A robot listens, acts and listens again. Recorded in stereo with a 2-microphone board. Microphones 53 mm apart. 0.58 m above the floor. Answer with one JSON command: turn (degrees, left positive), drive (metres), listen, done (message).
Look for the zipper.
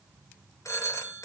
{"listen": true}
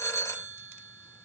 {"listen": true}
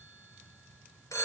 {"done": "I can't make out a zipper to turn to."}